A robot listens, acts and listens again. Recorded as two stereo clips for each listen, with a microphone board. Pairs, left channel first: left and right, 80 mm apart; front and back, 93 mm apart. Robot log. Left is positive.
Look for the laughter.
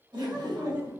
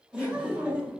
note: The laughter: 105° right.
cmd yaw -105
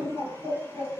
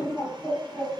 note: The laughter is now 40° right.
cmd yaw -40
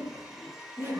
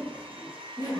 note: The laughter is now 40° right.
cmd yaw -40
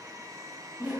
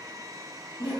note: The laughter is now 20° right.
cmd yaw -20
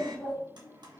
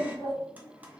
cmd idle
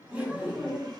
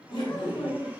note: The laughter is now 15° right.
cmd yaw -15
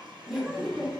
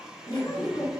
end: Found it: laughter, straight ahead.